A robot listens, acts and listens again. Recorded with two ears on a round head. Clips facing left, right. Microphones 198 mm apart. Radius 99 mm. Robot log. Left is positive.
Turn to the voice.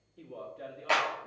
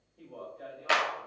note: The man speaking: about 35° left or 145° left.
cmd yaw +35
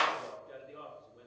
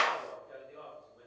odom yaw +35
note: The man speaking: about 40° left or 140° left.
cmd yaw +40
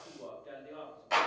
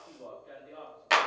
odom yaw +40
note: So it is at 120° left.
cmd yaw +120
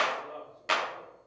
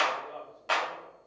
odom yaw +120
end: Found it: a man speaking, straight ahead, 2 to 4 m away.